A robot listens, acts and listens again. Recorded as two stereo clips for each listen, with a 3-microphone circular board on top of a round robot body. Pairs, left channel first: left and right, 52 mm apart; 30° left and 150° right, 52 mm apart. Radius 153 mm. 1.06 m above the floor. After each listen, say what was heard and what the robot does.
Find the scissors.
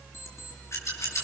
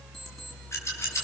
The scissors: 60° left. Turn 60° left.
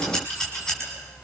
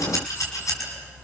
The scissors is now 10° left. Turn 10° left.
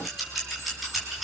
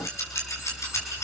Found it: scissors, straight ahead, over 4 m away.